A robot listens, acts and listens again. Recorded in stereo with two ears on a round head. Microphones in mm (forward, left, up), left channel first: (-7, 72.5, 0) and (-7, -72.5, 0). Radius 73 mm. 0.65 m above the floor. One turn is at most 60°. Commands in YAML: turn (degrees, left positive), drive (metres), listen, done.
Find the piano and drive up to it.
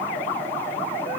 listen: true
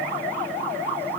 listen: true
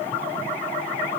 done: "I can't make out a piano."